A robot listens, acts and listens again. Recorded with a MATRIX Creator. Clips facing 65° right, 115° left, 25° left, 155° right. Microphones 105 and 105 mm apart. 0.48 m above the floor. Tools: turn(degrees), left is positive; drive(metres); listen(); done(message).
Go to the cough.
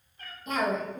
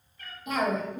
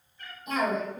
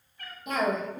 turn(degrees=-170)
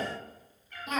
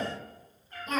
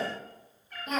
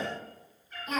turn(degrees=10)
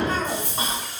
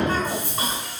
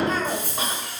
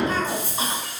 drive(metres=1.0)
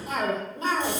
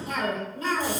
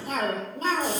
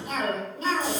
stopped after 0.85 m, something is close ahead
turn(degrees=-10)
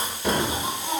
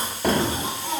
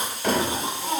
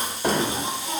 done("Arrived at the cough, straight ahead.")